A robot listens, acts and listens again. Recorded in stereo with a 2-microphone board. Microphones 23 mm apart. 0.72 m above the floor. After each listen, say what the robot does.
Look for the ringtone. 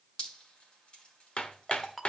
Turn 30° left.
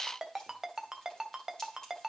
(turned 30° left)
Turn 15° right.
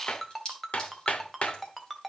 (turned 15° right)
Facing the ringtone.